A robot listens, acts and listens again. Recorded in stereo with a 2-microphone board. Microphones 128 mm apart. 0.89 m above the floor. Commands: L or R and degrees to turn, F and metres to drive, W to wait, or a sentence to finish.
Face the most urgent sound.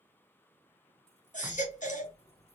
L75
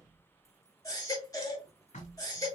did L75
L25
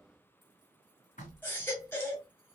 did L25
L15
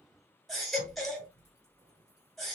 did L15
Facing the baby crying.